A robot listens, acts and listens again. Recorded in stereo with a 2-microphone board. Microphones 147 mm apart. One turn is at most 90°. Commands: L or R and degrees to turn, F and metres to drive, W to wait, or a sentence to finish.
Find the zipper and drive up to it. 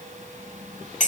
W
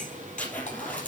L30
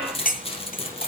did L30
L90
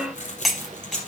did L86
L55
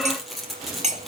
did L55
F1.0
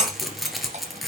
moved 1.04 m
F1.0
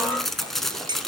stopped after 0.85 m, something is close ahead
I am next to the zipper.